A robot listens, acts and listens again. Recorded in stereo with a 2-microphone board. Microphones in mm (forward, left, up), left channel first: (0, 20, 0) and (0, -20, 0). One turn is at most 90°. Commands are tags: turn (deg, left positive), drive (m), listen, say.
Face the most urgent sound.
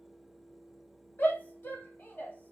<turn deg="55"/>
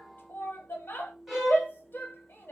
<turn deg="65"/>
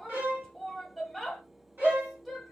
<say>Found it: a shout, straight ahead.</say>